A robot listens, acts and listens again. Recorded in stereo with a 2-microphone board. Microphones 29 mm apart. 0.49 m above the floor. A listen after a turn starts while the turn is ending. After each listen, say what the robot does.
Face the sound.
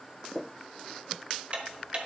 Turn 40° right.
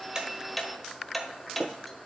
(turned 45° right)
Found it: ticking, straight ahead, 1 to 2 m away.